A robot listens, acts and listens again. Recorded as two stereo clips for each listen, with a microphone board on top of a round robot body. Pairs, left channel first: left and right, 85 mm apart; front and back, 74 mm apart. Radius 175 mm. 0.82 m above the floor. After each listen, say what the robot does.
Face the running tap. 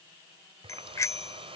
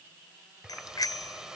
Turn 100° right.
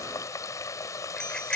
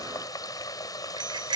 Turn 35° left.
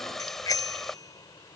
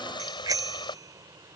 Facing the running tap.